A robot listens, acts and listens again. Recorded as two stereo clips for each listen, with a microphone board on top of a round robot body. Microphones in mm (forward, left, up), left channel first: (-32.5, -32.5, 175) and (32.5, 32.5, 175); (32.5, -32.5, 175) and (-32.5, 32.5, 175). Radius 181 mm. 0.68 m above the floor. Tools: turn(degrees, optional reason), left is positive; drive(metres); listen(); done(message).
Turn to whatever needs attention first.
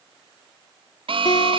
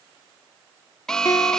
turn(degrees=40, reason="The alarm: 40° left.")
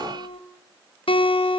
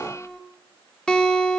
listen()
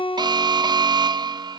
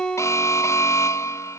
turn(degrees=10, reason="The alarm is now 10° left.")
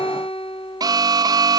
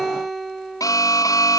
done("Found it: an alarm, straight ahead, under 1 m away.")